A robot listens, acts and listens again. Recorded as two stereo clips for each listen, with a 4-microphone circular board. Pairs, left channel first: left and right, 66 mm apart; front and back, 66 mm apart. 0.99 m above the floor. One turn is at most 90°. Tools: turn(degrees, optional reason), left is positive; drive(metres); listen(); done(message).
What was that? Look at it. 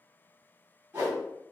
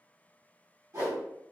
turn(degrees=-90, reason="The whoosh: 150° right.")
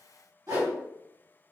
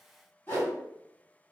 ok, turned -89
turn(degrees=-60, reason="The whoosh is now 60° right.")
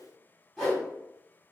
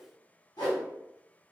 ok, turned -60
done("Found it: a whoosh, straight ahead.")